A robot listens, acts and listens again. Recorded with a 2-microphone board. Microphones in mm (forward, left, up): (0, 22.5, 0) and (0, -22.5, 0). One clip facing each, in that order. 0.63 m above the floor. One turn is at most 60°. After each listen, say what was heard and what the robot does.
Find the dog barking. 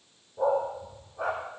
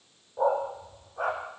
The dog barking: about 55° right or 125° right. Turn 55° right.
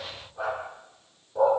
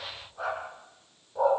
Facing the dog barking.